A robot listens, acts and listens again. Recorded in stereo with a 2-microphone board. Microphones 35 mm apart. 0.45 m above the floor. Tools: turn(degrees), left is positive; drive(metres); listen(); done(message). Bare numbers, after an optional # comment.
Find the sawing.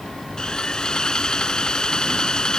# The sawing: about 25° left or 155° left.
turn(25)
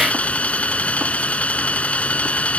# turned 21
# So it is at 135° left.
turn(135)
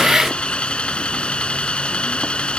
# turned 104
# The sawing is now 30° left.
turn(30)
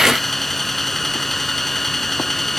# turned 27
done("Found it: sawing, straight ahead.")